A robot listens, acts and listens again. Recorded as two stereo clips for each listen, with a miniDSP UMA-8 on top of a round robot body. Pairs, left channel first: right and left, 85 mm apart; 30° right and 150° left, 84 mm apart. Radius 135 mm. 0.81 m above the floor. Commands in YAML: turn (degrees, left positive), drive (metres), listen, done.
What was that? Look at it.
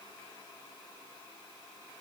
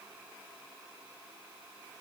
listen: true
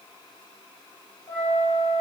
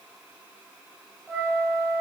turn: -110
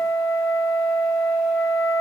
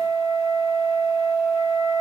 turn: 15
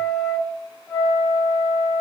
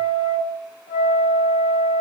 done: "Found it: a flute, straight ahead, 1 to 2 m away."